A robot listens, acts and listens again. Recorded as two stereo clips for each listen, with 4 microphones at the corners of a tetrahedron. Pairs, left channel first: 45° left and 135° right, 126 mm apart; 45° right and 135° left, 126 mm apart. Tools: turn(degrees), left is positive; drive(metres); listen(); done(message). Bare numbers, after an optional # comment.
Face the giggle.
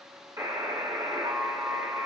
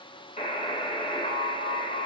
listen()
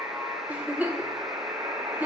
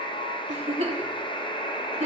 # The giggle: 150° left.
turn(150)
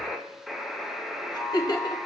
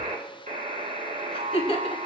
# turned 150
done("Facing the giggle.")